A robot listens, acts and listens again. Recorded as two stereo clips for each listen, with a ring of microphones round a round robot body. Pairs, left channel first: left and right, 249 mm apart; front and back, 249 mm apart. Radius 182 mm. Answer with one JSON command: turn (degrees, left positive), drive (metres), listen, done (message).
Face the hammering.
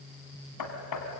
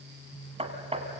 {"turn": 115}
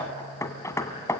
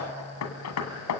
{"turn": 10}
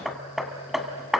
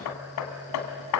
{"done": "Facing the hammering."}